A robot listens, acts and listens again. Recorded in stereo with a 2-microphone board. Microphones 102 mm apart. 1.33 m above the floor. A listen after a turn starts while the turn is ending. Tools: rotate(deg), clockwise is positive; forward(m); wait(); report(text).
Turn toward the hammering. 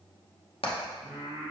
rotate(-65)
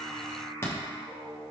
rotate(-25)
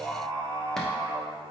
wait()
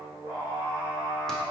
wait()
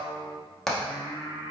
report("Facing the hammering.")